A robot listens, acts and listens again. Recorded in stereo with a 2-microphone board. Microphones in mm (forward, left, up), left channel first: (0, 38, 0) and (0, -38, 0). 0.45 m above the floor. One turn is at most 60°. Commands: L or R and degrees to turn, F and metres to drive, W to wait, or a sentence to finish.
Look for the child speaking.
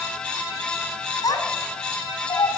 L60
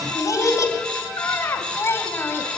L25
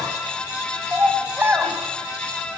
R25
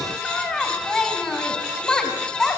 L10
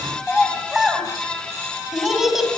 Found it: a child speaking, straight ahead, 2 to 4 m away.